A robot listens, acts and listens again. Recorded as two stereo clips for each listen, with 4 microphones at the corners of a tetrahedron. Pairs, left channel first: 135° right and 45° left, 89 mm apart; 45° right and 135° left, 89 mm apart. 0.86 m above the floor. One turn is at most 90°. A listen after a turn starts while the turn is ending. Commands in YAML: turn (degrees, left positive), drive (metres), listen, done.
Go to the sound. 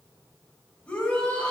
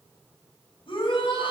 turn: -60
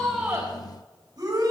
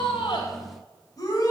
drive: 1.0
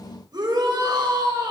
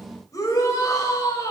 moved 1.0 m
drive: 1.0
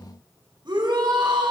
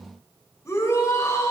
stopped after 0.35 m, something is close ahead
turn: 15
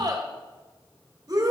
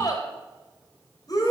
done: "Blocked. The shout is further on, straight ahead."